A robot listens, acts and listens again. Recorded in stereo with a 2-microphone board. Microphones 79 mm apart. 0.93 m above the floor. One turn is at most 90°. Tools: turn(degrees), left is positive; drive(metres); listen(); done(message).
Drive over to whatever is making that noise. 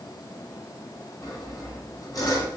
turn(degrees=50)
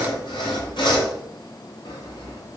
turn(degrees=80)
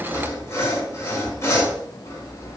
turn(degrees=35)
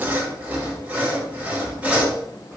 turn(degrees=-20)
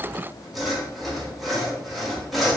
drive(metres=1.0)
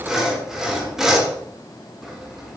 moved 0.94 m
drive(metres=1.0)
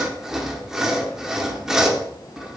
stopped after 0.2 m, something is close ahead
done("I am next to the sawing.")